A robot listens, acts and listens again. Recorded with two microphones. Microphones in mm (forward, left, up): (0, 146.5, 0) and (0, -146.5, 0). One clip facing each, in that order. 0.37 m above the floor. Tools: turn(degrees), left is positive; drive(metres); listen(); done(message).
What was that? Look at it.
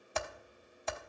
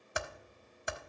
turn(degrees=-30)
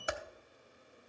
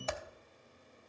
turn(degrees=15)
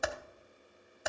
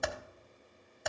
done("Facing the typing on a keyboard, under 1 m away.")